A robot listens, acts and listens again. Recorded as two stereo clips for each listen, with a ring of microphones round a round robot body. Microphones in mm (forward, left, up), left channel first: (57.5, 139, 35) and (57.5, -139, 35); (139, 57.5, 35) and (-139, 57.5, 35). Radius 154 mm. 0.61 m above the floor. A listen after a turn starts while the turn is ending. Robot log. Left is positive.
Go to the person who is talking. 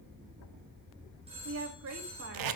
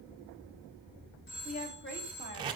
note: The woman speaking: 55° right.
cmd yaw -55
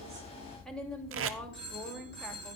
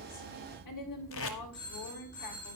cmd fwd 1.0
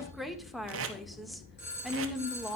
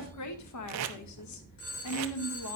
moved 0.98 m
cmd fwd 1.0
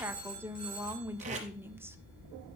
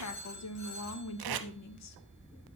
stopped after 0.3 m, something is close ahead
note: The woman speaking is now 10° right.
cmd yaw -10
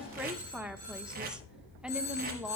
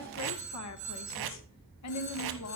end: Arrived at the woman speaking, straight ahead.